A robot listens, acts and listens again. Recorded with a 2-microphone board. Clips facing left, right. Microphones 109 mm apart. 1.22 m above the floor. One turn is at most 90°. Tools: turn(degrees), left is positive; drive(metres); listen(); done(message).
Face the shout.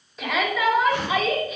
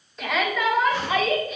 turn(degrees=30)
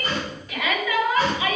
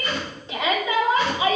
turn(degrees=-25)
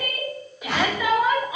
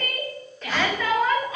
turn(degrees=15)
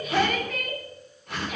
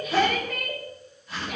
done("Facing the shout, 2 to 4 m away.")